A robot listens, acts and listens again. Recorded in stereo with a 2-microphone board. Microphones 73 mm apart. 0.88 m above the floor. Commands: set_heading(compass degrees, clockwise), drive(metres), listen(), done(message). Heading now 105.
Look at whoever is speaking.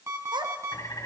set_heading(195)
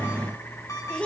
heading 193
set_heading(178)
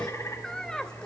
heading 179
set_heading(169)
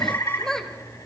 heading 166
done("Facing the child speaking, 2 to 4 m away.")